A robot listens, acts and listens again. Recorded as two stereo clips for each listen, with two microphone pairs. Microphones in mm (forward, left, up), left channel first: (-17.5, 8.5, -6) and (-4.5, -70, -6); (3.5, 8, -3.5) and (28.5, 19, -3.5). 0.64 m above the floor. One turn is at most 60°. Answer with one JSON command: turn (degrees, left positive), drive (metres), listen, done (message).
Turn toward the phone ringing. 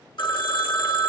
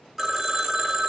{"turn": 60}
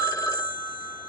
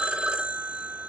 {"turn": 60}
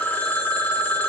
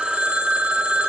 {"turn": 30}
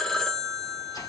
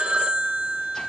{"turn": 15}
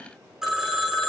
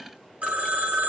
{"done": "Found it: a phone ringing, straight ahead."}